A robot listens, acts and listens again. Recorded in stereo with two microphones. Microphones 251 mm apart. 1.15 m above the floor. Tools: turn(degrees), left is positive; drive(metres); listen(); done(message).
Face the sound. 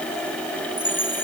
turn(degrees=30)
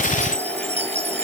turn(degrees=-25)
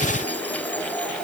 listen()
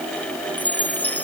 done("Facing the chime.")